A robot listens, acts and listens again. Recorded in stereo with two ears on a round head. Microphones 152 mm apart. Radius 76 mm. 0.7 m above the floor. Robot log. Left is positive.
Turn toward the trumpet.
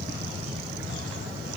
cmd idle
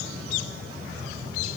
cmd idle
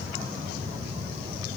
end: I can't make out a trumpet to turn to.